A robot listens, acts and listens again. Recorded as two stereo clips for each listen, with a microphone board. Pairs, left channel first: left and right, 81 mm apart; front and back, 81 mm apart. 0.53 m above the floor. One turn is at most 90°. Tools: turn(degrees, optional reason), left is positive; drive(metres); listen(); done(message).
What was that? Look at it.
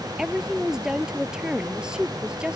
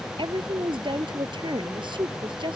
turn(degrees=-90, reason="The woman speaking: 170° right.")
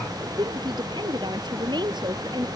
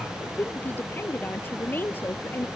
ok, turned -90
turn(degrees=-65, reason="The woman speaking is now 65° right.")
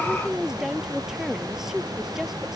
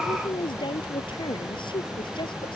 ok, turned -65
done("Found it: a woman speaking, straight ahead.")